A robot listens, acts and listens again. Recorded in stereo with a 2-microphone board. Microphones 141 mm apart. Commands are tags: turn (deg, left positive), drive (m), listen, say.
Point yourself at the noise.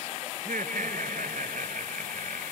<turn deg="-90"/>
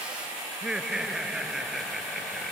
<say>Found it: laughter, straight ahead.</say>